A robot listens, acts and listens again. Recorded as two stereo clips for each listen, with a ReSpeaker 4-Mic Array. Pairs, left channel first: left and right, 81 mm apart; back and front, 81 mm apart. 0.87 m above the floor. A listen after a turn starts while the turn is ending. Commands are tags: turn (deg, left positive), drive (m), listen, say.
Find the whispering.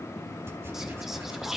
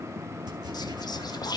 <turn deg="-175"/>
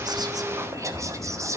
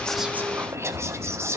<turn deg="-50"/>
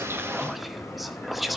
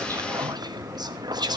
<say>Found it: whispering, straight ahead, under 1 m away.</say>